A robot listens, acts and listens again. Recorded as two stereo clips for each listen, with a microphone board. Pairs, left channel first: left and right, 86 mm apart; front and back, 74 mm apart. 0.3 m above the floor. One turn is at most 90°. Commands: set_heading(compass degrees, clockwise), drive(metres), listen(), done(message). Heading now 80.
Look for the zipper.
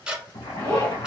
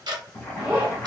set_heading(350)
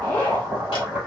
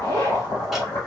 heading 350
set_heading(330)
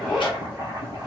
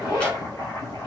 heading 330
done("Facing the zipper.")